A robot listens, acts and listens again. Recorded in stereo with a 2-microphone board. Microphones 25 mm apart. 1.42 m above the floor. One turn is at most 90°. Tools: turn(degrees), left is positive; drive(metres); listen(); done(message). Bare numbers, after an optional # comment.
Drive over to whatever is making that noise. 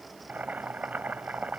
turn(-90)
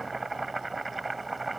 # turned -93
drive(1.0)
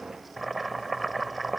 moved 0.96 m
drive(1.0)
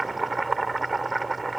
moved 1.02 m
# The boiling is now 10° left.
turn(10)
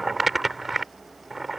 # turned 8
drive(1.0)
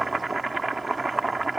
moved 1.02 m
drive(1.0)
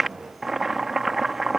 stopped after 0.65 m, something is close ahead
done("I am next to the boiling.")